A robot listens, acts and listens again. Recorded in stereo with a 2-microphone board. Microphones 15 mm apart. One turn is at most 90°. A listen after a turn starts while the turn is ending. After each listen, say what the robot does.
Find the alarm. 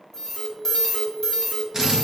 Turn 20° left.
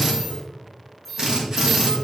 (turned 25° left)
Found it: an alarm, straight ahead, 1 to 2 m away.